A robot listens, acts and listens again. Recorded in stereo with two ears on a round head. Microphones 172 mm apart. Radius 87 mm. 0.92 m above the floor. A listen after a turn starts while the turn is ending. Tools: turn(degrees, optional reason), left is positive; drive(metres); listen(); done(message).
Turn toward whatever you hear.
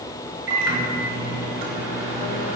turn(degrees=-55, reason="The microwave: about 55° right or 125° right.")
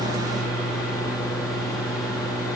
done("Facing the microwave.")